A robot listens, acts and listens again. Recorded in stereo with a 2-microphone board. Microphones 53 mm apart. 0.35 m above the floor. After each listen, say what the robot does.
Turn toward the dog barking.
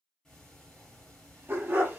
Turn 35° right.
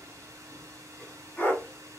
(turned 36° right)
Turn 35° left.
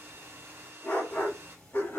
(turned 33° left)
Turn 45° left.
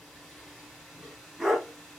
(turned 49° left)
Facing the dog barking.